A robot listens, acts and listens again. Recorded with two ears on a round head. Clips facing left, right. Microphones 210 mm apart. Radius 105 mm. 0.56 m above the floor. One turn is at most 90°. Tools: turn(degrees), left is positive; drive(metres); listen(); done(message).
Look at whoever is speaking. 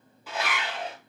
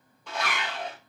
listen()
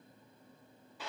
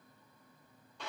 listen()
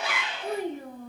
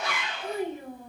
turn(degrees=50)
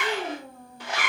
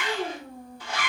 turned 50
turn(degrees=70)
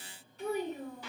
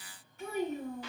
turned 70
turn(degrees=35)
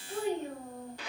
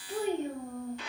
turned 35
turn(degrees=-20)
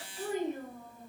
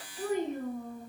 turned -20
done("Facing the child speaking, 1 to 2 m away.")